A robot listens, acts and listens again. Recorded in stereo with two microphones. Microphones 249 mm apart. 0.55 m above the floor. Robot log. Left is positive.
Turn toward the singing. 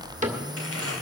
cmd idle
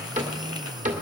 cmd idle
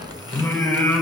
cmd yaw +30
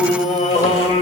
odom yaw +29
note: So it is at 150° left.
cmd yaw +150
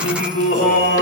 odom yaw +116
note: The singing is now 45° left.
cmd yaw +45
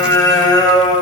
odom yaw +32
note: The singing is now 15° left.
cmd yaw +15
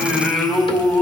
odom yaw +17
end: Facing the singing, 2 to 4 m away.